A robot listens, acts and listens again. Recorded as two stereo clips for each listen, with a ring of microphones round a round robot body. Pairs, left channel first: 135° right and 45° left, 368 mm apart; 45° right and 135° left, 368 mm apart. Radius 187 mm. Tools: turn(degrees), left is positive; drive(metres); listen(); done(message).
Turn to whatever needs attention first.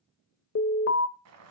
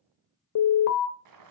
turn(degrees=-85)
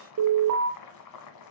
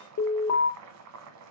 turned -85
done("Facing the alarm, 1 to 2 m away.")